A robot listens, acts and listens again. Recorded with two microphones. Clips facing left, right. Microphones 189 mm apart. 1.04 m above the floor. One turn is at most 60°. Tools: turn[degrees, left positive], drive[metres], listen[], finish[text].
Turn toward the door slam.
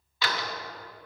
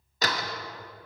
Thought: The door slam: about 40° right or 140° right.
Action: turn[-40]
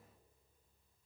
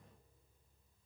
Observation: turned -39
Action: listen[]
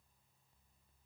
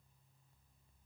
Action: finish[I heard a door slam, but can't make it out now. It was about 5° right or 100° right.]